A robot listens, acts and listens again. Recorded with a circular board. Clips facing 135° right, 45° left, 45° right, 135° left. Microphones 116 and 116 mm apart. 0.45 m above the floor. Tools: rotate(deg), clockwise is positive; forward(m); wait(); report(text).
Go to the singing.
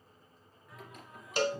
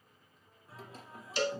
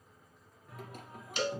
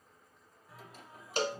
rotate(15)
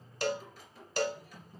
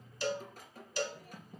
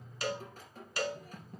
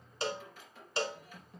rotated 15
forward(1.0)
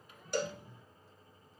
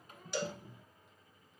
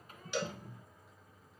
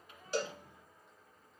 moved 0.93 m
forward(1.0)
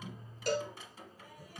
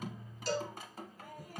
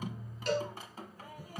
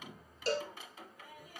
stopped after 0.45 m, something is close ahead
report("Arrived at the singing, straight ahead.")